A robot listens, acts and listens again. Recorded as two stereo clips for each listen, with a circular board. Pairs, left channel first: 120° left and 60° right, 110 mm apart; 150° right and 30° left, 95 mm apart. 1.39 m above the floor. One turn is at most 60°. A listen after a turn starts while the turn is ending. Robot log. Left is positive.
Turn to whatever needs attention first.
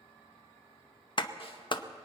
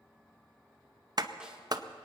cmd idle
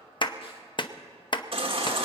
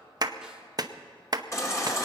note: The baby crying: 95° right.
cmd yaw -60
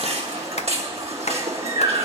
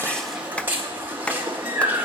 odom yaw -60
note: The baby crying is now 40° right.
cmd yaw -40
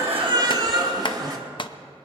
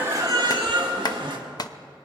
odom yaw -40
note: The baby crying is now 10° right.
cmd yaw -10
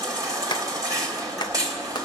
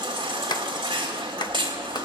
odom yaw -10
end: Found it: a baby crying, straight ahead, 1 to 2 m away.